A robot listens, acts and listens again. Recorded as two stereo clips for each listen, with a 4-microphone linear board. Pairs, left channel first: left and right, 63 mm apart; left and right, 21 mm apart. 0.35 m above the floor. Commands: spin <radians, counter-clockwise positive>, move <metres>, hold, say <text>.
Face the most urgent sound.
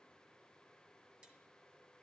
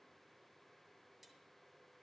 hold
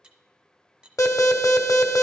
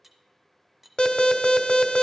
spin 1.05
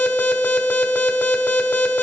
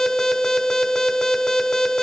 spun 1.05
spin 0.61
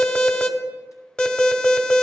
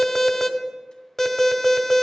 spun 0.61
spin 0.26
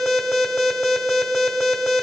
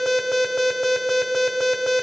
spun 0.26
say Found it: an alarm, straight ahead.